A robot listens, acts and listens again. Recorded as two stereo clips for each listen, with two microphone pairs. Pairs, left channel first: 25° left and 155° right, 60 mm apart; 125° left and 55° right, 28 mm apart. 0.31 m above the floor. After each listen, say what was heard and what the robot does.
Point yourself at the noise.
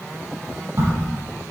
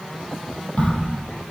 The crack: 160° left. Turn 160° left.
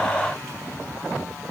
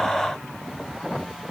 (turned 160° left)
Facing where the crack came from. I can't hear it now.